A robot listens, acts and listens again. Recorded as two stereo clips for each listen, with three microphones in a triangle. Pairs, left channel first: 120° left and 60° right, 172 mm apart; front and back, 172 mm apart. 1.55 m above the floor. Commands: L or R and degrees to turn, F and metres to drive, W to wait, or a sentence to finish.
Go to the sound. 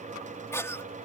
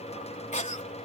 L45
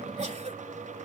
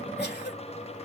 W
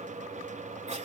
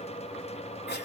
W
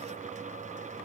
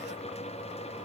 Facing where the cough came from. I can't hear it now. I did not reach it.